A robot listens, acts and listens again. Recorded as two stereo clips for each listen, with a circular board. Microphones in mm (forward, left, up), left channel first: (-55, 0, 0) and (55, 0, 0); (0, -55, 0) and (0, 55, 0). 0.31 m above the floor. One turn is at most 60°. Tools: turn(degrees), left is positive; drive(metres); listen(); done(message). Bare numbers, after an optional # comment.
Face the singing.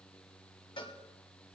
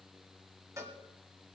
listen()
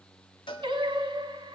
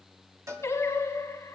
# The singing: 30° right.
turn(-30)
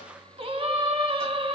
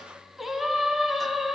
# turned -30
done("Facing the singing, 1 to 2 m away.")